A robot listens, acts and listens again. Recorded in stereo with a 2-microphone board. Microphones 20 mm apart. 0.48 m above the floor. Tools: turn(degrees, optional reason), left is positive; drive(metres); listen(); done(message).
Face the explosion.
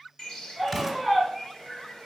turn(degrees=30)
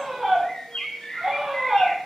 listen()
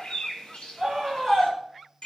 done("I heard an explosion, but can't make it out now. It was about 30° right or 150° left.")